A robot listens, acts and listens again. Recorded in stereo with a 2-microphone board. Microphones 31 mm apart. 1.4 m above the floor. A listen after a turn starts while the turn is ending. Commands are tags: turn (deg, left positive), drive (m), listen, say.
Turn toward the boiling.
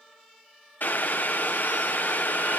<turn deg="75"/>
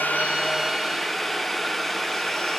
<say>Facing the boiling, under 1 m away.</say>